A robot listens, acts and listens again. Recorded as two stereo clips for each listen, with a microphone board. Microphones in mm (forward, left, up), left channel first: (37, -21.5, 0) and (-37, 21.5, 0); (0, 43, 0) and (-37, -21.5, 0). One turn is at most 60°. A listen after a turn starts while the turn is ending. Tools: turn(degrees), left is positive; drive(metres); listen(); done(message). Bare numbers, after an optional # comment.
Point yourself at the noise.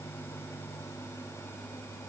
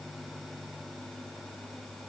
listen()
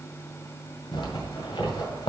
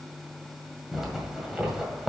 # The zipper: 35° right.
turn(-35)
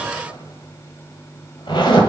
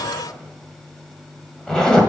# The zipper is now 20° right.
turn(-20)
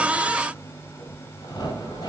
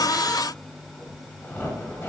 done("Facing the zipper.")